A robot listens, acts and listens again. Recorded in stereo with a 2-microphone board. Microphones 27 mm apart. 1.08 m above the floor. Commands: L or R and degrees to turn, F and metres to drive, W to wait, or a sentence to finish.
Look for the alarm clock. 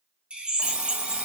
R60
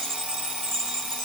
R50
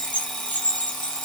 Facing the alarm clock.